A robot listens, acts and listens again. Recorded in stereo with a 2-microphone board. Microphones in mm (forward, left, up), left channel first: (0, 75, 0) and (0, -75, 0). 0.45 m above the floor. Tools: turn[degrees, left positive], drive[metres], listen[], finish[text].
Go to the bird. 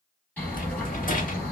Action: turn[30]
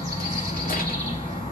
Thought: So it is at 140° left.
Action: turn[140]
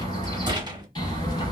Thought: The bird is now 30° left.
Action: turn[30]
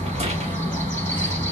Thought: The bird is now 15° left.
Action: turn[15]
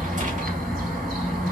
Action: drive[1.0]
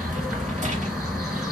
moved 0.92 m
Action: drive[1.0]
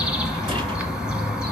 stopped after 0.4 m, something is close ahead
Action: finish[Arrived at the bird, straight ahead.]